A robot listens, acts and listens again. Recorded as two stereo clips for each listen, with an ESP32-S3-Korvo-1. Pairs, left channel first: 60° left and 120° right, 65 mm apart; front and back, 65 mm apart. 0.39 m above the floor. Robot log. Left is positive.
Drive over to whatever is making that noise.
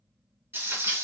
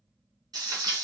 note: The frying: 175° right.
cmd yaw -175
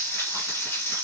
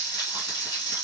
note: The frying is now 10° left.
cmd yaw +10
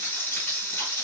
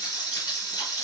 cmd fwd 1.0
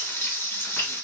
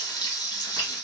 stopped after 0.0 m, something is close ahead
end: Blocked. The frying is further on, straight ahead.